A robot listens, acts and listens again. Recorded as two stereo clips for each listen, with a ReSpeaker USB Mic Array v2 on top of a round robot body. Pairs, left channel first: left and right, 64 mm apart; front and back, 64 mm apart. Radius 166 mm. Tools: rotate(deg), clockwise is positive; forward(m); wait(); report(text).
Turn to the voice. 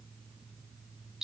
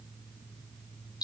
wait()
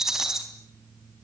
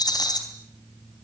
wait()
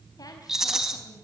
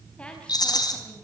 rotate(-75)
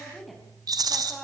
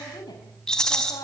report("Facing the woman speaking, over 4 m away.")